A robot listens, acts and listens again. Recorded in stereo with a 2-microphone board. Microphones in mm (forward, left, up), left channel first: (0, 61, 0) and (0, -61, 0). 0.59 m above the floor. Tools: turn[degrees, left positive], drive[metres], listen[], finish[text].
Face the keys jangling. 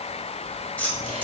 Action: turn[30]
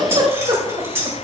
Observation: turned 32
Thought: So it is at 20° right.
Action: turn[-20]
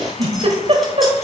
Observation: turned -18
Action: listen[]
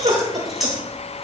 Action: finish[Found it: keys jangling, straight ahead.]